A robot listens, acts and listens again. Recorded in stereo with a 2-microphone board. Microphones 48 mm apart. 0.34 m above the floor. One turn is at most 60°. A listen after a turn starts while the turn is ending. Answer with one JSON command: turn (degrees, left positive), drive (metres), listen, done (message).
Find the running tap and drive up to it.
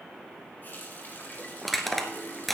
{"turn": 40}
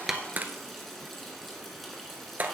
{"drive": 1.0}
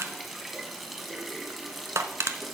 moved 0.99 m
{"drive": 1.0}
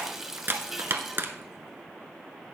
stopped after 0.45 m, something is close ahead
{"turn": -10}
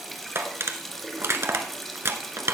{"done": "I am next to the running tap."}